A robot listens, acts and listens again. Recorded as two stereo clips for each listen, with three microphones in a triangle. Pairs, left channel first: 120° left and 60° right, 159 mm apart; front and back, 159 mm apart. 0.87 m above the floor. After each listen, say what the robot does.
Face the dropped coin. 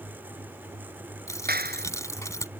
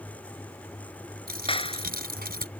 Turn 170° right.
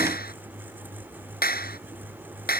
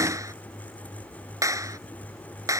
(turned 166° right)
I heard a dropped coin from this way, but can't make it out now.